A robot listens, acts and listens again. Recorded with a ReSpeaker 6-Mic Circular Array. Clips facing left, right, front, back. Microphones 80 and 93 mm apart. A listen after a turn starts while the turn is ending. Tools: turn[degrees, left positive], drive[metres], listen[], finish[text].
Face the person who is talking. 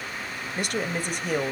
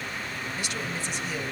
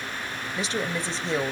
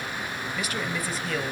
Thought: The woman speaking: 60° left.
Action: turn[60]
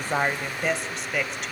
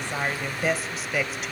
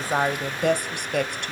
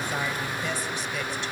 Action: finish[Facing the woman speaking.]